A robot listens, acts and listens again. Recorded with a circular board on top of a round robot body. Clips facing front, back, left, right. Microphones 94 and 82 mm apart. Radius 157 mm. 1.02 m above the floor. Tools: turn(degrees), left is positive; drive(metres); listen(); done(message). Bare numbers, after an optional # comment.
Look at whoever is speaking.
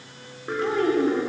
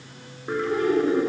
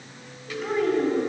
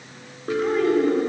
done("Facing the child speaking.")